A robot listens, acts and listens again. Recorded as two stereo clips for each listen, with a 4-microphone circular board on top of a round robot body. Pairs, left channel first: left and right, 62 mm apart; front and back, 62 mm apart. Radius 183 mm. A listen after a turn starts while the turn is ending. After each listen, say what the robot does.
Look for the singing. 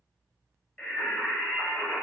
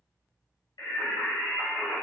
Turn 10° left.
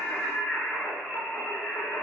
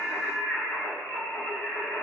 Facing the singing.